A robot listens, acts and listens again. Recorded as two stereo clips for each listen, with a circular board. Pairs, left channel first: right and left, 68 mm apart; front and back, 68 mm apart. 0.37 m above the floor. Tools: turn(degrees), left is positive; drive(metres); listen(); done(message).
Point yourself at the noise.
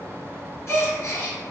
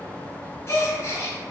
turn(degrees=-45)
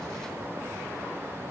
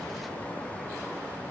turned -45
done("I heard a gasp from this way, but can't make it out now.")